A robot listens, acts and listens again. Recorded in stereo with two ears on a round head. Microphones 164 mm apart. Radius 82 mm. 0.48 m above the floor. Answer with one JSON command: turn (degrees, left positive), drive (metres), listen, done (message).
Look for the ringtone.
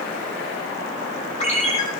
{"turn": 35}
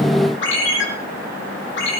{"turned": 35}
{"turn": 110}
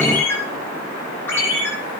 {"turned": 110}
{"turn": 15}
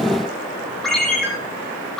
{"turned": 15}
{"done": "Found it: a ringtone, straight ahead, over 4 m away."}